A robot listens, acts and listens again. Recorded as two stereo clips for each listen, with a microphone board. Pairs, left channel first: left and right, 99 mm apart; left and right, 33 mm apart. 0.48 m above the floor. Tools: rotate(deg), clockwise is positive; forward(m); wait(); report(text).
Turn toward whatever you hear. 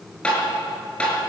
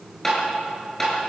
rotate(-30)
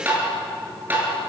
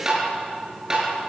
rotate(20)
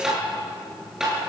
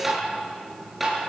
report("Found it: tapping, straight ahead, over 4 m away.")